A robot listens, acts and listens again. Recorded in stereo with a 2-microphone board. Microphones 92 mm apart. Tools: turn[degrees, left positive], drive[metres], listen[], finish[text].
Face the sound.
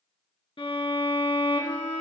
Thought: The violin: about 75° left or 105° left.
Action: turn[75]
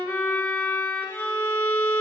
Thought: So it is at 25° left.
Action: turn[25]
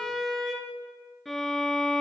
Action: finish[Facing the violin, 2 to 4 m away.]